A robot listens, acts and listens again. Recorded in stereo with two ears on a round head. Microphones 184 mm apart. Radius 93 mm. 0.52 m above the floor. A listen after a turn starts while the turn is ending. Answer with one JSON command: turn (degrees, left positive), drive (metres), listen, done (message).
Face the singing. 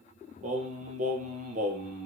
{"turn": -40}
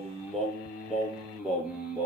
{"done": "Found it: singing, straight ahead."}